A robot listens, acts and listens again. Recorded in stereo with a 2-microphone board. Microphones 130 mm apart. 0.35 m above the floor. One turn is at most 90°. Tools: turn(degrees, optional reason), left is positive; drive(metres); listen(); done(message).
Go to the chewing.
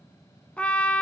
listen()
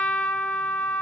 listen()
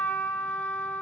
done("I can't make out chewing to turn to.")